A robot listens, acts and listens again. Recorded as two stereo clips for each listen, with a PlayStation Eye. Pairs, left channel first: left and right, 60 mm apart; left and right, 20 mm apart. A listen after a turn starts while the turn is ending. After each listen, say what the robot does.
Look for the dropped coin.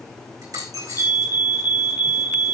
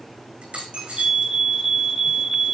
Turn 90° right.
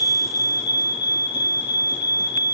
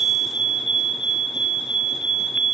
Facing where the dropped coin came from. I can't hear it now.